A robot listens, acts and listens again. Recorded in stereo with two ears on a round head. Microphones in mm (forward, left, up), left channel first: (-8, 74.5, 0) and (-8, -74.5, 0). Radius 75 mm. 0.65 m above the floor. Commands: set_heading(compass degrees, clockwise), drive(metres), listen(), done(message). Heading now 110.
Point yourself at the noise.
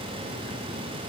listen()
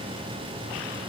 listen()
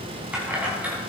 set_heading(140)
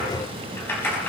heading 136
set_heading(126)
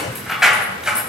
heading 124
done("Found it: keys jangling, straight ahead, 2 to 4 m away.")